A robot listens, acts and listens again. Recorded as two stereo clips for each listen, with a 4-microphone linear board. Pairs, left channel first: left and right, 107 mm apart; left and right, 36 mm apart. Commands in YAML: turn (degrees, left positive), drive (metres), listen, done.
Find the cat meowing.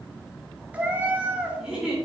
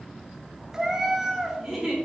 turn: -30
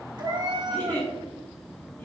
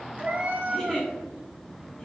turn: -135
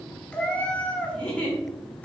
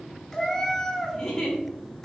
turn: 10
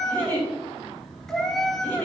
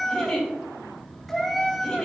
done: "Found it: a cat meowing, straight ahead, under 1 m away."